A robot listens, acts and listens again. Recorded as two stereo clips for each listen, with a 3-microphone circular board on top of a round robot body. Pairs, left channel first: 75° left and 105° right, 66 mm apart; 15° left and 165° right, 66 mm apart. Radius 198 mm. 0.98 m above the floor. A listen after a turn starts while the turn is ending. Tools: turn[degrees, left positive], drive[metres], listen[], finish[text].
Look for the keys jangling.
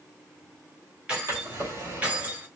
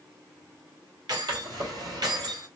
Thought: The keys jangling: 170° right.
Action: turn[-170]
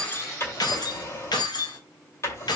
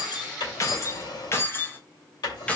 Thought: The keys jangling is now 90° left.
Action: turn[90]
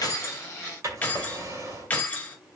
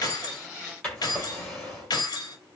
Thought: The keys jangling is now 10° left.
Action: turn[10]
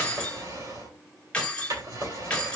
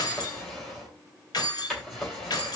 Action: finish[Found it: keys jangling, straight ahead.]